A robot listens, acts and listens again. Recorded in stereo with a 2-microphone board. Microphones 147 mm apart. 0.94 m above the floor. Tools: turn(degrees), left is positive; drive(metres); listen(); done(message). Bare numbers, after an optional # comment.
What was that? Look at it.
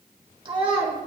# The child speaking: about 40° right or 140° right.
turn(-40)
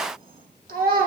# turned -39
# So it is at 100° right.
turn(-100)
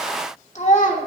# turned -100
# The child speaking is now 60° left.
turn(60)
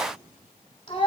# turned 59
# The child speaking is now 35° left.
turn(35)
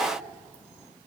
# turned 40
listen()
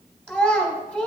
done("Facing the child speaking, 1 to 2 m away.")